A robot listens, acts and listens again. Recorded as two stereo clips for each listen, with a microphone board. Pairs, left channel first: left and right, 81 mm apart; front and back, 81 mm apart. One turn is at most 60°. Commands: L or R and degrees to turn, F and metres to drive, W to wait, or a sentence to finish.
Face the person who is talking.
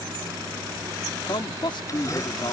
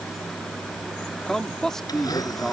L60
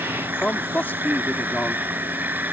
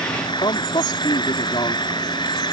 L20
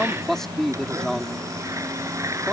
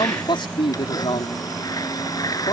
Facing the man speaking.